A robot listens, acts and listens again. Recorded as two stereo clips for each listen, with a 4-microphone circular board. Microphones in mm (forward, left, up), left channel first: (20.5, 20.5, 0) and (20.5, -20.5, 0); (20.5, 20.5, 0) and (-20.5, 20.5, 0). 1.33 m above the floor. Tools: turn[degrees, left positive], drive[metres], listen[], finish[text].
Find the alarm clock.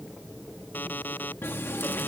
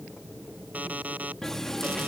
Thought: The alarm clock: 125° left.
Action: turn[125]
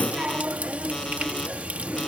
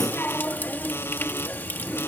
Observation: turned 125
Action: listen[]
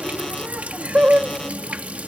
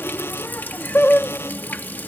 Action: listen[]
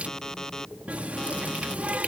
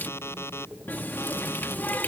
Thought: The alarm clock is now 15° left.
Action: turn[15]
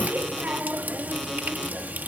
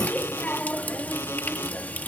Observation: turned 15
Action: listen[]
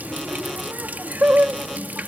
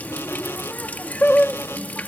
Action: listen[]
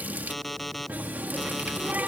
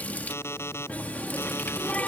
Action: finish[Facing the alarm clock.]